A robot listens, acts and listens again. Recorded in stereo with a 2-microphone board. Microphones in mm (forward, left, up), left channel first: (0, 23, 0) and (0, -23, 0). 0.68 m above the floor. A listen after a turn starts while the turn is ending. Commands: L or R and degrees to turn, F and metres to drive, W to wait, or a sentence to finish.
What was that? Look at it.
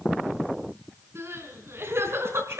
R60
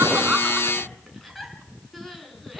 Found it: crying, straight ahead, 2 to 4 m away.